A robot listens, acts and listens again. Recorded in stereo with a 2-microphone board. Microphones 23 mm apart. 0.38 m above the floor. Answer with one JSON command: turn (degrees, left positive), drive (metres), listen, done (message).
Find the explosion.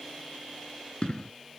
{"turn": 45}
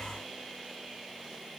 {"listen": true}
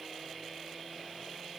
{"done": "I heard an explosion, but can't make it out now. It was about straight ahead or 90° left."}